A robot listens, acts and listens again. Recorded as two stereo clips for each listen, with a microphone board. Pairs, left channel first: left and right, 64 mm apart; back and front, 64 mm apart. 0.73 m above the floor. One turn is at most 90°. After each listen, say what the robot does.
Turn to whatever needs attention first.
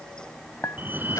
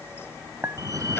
Turn 30° right.
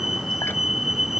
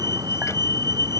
Facing the fire alarm.